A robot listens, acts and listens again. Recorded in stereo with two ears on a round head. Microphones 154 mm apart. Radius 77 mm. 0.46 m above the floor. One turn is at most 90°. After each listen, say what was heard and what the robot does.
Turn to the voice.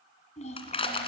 The child speaking: about 40° left or 140° left. Turn 40° left.
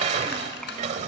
Keep listening.
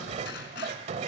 Keep listening.
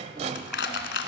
I heard a child speaking, but can't make it out now. It was about straight ahead or 100° left.